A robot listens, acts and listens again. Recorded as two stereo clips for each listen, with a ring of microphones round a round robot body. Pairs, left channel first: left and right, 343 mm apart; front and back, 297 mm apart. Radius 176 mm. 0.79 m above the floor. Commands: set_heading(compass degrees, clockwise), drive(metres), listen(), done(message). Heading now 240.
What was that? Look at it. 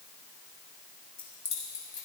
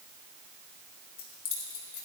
set_heading(225)
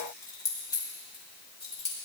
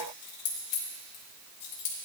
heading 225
set_heading(205)
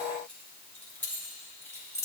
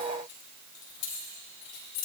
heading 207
set_heading(197)
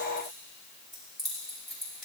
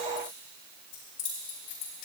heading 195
done("Found it: keys jangling, straight ahead.")